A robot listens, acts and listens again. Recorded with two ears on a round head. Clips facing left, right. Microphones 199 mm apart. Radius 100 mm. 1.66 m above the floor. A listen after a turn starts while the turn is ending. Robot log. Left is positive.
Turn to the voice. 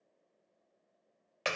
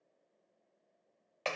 cmd idle
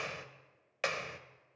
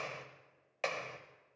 cmd idle
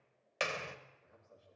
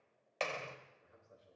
note: The man speaking: about 35° right or 145° right.
cmd yaw -35
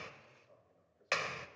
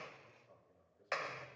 note: So it is at 110° right.
cmd yaw -110
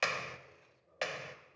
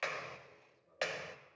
note: The man speaking is now 15° left.
cmd yaw +15
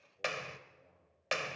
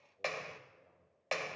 end: Facing the man speaking.